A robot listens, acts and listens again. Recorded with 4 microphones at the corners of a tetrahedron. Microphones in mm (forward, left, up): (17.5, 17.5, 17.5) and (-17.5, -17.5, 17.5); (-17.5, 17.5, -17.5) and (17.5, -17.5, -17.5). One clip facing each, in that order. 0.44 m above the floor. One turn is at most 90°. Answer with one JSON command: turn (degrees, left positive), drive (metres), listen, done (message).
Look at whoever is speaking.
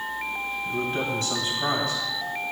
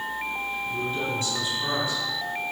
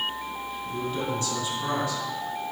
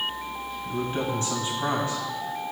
{"turn": 15}
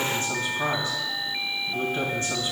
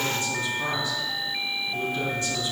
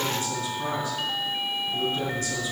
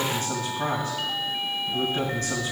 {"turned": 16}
{"done": "Facing the man speaking."}